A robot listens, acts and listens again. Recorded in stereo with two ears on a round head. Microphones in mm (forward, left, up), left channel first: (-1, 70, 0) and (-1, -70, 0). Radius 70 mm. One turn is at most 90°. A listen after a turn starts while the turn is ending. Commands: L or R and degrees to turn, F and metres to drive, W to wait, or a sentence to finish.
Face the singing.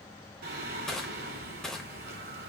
R70
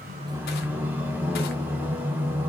R15
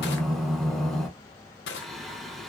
Found it: singing, straight ahead.